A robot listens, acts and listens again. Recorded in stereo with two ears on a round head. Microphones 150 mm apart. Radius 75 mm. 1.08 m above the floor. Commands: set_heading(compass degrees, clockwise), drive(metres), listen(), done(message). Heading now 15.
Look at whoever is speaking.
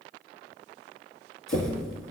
listen()
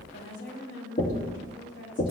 set_heading(305)
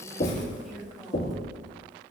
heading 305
done("Facing the woman speaking, over 4 m away.")